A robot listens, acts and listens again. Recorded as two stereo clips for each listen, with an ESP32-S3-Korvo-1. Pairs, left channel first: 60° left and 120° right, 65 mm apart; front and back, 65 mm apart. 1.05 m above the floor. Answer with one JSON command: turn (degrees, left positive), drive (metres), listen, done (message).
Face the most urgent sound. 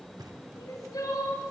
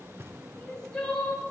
{"turn": 80}
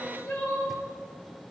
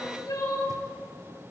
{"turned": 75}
{"done": "Facing the crying, over 4 m away."}